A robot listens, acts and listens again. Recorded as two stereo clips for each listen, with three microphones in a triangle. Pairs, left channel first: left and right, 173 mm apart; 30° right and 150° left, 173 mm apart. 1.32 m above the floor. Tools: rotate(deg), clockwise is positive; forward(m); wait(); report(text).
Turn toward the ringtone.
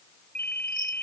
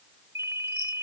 rotate(-75)
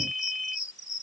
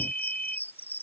report("Facing the ringtone.")